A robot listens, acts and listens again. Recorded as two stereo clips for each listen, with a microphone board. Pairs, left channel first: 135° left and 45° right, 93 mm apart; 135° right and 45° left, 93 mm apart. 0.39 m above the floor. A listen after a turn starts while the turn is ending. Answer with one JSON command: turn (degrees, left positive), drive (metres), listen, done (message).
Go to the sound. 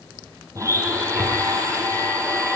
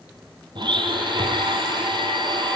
{"turn": 10}
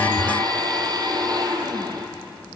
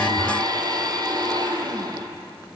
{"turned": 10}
{"drive": 1.0}
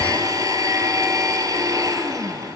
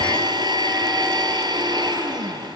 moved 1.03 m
{"drive": 1.0}
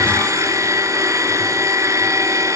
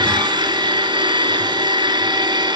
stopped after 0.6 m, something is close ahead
{"turn": 10}
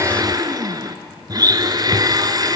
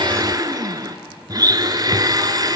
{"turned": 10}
{"done": "Arrived at the blender, straight ahead."}